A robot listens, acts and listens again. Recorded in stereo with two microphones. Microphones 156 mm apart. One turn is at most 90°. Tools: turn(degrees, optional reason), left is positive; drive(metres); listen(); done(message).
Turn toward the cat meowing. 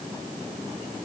listen()
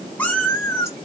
turn(degrees=20, reason="The cat meowing: about 20° left or 160° left.")
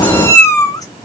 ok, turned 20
turn(degrees=25, reason="The cat meowing: about 25° left or 155° left.")
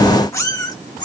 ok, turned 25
turn(degrees=30, reason="The cat meowing: about 30° left or 150° left.")
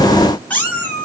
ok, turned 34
turn(degrees=30)
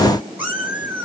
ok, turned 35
turn(degrees=-10, reason="So it is at 10° right.")
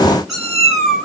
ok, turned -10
done("Found it: a cat meowing, straight ahead.")